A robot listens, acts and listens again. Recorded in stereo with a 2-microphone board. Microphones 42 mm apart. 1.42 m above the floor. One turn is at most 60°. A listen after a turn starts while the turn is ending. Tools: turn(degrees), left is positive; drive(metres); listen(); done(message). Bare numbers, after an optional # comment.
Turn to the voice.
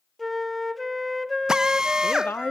# The woman speaking: about 55° left or 125° left.
turn(55)
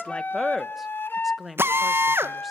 done("Facing the woman speaking.")